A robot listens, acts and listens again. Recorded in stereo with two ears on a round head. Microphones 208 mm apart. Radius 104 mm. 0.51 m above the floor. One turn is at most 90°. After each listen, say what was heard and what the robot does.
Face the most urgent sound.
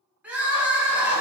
Turn 30° right.
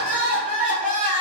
So it is at 145° right. Turn 90° right.
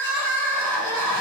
The crying is now 40° right. Turn 40° right.
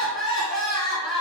Found it: crying, straight ahead.